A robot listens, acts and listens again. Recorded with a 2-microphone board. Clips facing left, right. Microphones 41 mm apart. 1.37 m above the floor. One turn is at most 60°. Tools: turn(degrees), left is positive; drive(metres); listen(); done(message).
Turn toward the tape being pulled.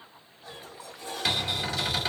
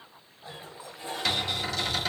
listen()
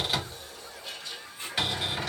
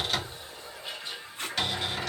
turn(degrees=-60)
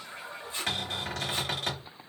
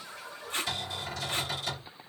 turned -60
turn(degrees=-55)
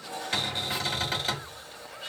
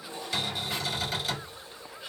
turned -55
listen()
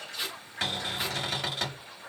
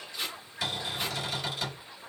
done("Found it: tape being pulled, straight ahead.")